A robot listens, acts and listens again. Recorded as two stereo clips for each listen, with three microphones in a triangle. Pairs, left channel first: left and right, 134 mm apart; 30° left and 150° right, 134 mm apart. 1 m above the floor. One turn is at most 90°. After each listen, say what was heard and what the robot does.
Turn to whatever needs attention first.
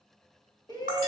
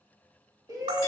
The shout: 150° left. Turn 90° left.
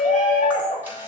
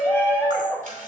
The shout is now 100° left. Turn 90° left.
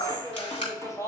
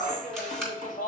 The shout is now 25° left. Turn 25° left.
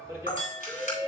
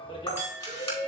The shout is now 20° right. Turn 20° right.
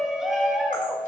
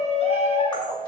Found it: a shout, straight ahead.